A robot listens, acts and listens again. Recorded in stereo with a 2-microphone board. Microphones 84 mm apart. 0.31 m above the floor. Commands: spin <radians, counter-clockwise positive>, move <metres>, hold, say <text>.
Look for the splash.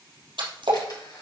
spin -1.57
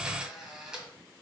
say Facing where the splash came from. I can't hear it now.